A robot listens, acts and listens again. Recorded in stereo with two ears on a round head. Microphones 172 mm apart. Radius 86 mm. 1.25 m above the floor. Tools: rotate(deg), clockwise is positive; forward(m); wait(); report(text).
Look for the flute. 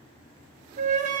rotate(40)
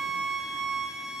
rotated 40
report("Found it: a flute, straight ahead.")